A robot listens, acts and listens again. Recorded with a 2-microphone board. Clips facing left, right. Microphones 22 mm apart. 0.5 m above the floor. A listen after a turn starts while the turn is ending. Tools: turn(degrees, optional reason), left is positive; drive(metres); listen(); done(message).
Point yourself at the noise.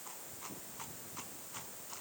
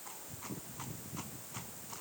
listen()
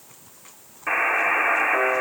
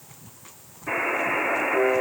turn(degrees=55, reason="The buzzer: about 55° left or 125° left.")
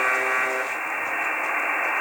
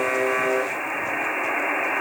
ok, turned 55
done("Found it: a buzzer, straight ahead, under 1 m away.")